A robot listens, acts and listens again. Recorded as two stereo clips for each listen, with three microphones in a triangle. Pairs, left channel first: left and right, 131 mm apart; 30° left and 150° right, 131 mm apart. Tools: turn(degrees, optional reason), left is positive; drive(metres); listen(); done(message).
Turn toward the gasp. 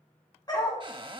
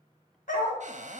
listen()
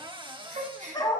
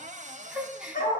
turn(degrees=-65, reason="The gasp: 65° right.")
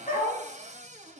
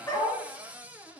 done("Facing where the gasp came from. I can't hear it now.")